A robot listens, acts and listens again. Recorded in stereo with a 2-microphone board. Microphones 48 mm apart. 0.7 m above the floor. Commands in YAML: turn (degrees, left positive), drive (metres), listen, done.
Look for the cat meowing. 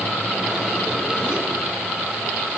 listen: true
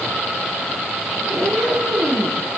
turn: -70
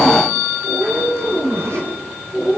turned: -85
turn: -20
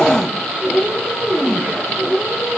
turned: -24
done: "Facing the cat meowing."